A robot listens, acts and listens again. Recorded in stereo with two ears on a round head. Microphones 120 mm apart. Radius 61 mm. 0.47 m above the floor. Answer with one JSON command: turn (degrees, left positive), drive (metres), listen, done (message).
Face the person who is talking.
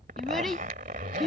{"turn": 30}
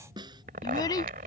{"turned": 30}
{"turn": 150}
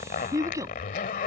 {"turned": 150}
{"turn": -25}
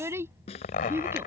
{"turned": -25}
{"turn": -20}
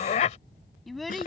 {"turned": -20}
{"done": "Facing the child speaking."}